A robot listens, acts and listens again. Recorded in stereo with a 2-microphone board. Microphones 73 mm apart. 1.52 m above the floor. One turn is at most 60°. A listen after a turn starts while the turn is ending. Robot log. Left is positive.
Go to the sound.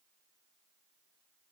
cmd idle
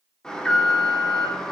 cmd yaw +30
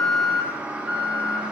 note: So it is at 20° right.
cmd yaw -20
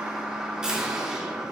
note: The alarm is now 10° right.
cmd yaw -10
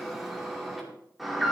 cmd fwd 1.0
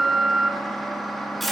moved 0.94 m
cmd fwd 1.0
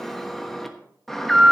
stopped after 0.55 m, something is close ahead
end: I am next to the alarm.